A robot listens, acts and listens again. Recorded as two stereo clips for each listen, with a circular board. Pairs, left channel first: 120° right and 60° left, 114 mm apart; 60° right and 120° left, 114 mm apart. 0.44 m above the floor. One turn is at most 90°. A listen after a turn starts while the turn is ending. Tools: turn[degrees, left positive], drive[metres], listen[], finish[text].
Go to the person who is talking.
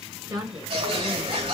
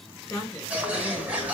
Action: drive[1.0]
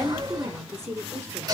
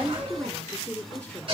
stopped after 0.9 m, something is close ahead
Thought: The woman speaking is now 15° left.
Action: turn[15]
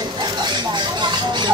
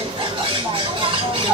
Action: listen[]
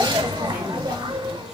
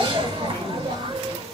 Action: listen[]
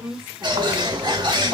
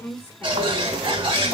Action: finish[I am next to the woman speaking.]